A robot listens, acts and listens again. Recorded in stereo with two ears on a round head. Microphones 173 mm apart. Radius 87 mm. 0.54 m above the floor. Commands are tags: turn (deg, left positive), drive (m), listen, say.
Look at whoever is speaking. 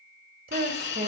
<turn deg="-45"/>
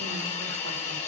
<listen/>
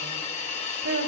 <turn deg="-80"/>
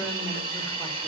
<listen/>
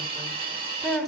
<say>Facing the woman speaking, 1 to 2 m away.</say>